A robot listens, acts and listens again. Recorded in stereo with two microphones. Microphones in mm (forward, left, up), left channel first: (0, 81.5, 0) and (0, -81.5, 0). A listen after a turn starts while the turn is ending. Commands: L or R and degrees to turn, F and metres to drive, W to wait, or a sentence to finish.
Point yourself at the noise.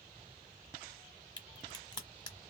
L25
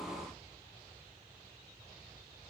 W
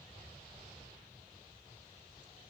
I heard a crack, but can't make it out now. It was about straight ahead or 130° left.